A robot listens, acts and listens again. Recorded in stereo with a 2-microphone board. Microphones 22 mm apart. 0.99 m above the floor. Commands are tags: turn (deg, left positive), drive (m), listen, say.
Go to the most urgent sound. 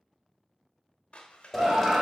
<turn deg="-60"/>
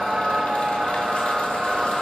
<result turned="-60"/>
<turn deg="-50"/>
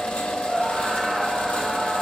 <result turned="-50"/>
<drive m="1.0"/>
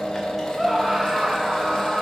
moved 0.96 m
<drive m="1.0"/>
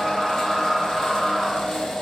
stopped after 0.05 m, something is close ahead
<say>Arrived at the scream, straight ahead.</say>